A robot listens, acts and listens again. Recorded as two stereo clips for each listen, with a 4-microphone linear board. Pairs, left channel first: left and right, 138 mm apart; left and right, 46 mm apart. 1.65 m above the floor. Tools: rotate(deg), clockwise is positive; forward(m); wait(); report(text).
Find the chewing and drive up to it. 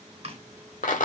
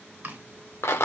rotate(45)
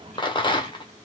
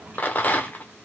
wait()
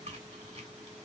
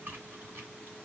rotate(75)
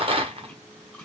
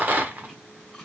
rotate(-10)
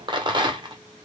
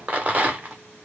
wait()
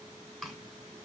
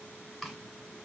forward(1.0)
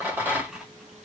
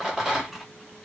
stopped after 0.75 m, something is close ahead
report("Arrived at the chewing, straight ahead.")